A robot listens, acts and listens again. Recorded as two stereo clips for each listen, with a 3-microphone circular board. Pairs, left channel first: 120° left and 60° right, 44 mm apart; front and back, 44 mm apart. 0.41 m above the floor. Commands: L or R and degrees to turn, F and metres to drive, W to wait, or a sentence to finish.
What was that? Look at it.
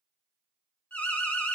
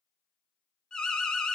L70
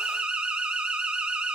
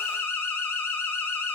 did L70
Facing the alarm.